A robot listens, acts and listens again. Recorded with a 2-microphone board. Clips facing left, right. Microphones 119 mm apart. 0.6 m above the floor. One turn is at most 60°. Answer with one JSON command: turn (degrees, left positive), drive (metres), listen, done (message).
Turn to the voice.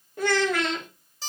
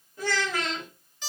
{"turn": 60}
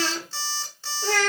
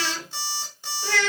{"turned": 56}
{"turn": 50}
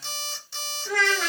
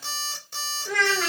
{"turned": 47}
{"done": "Facing the child speaking, under 1 m away."}